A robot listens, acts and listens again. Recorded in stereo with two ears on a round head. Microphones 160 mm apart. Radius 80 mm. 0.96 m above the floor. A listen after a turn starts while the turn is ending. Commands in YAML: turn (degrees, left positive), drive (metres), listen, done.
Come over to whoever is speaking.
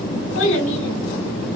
turn: 90
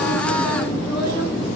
listen: true
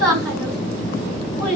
drive: 1.0
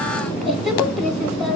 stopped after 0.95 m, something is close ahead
done: "I am next to the child speaking."